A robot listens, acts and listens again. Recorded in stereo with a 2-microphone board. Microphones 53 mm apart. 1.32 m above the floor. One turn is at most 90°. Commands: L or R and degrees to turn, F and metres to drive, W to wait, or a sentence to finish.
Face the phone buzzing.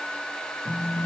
L75
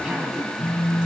L30
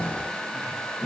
Facing the phone buzzing, 2 to 4 m away.